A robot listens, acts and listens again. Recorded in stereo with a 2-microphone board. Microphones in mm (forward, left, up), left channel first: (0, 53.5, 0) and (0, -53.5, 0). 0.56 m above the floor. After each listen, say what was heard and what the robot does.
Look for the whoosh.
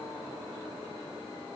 Keep listening.
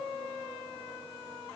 Keep listening.
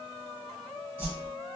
The whoosh: about 20° right or 160° right. Turn 20° right.
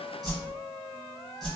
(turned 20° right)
Found it: a whoosh, straight ahead.